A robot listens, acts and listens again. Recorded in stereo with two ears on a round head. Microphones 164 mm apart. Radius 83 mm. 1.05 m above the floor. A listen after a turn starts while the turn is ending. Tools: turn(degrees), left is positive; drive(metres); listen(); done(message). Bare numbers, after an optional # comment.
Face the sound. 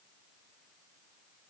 listen()
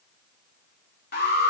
# The alarm: about 55° left or 125° left.
turn(55)
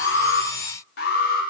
# So it is at 65° left.
turn(65)
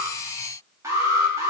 # The alarm is now 20° right.
turn(-20)
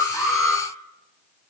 done("Found it: an alarm, straight ahead.")